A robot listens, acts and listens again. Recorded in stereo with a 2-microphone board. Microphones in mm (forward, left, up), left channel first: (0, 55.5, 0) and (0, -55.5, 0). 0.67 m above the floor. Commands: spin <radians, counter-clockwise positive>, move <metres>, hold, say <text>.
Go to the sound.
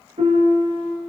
spin -1.57
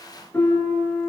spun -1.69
spin 0.35
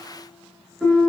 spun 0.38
move 1.0
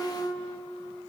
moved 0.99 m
move 1.0
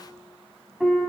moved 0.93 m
move 1.0
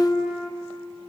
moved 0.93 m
move 1.0
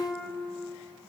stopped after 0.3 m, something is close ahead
say Arrived at the piano, straight ahead.